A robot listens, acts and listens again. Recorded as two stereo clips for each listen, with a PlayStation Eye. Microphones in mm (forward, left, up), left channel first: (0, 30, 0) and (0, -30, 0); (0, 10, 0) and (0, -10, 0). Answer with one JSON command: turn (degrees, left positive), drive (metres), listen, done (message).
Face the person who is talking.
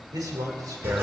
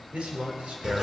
{"turn": -90}
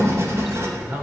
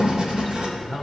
{"turn": -20}
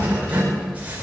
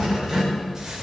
{"listen": true}
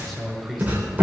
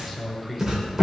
{"done": "Found it: a man speaking, straight ahead."}